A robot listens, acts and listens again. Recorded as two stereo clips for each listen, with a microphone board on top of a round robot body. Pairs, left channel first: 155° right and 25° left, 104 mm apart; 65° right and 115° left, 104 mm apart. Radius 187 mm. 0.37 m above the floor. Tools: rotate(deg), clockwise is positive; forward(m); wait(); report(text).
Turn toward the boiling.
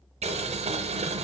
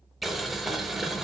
rotate(-25)
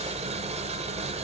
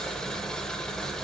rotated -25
rotate(-15)
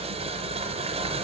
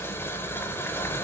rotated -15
report("Found it: boiling, straight ahead, under 1 m away.")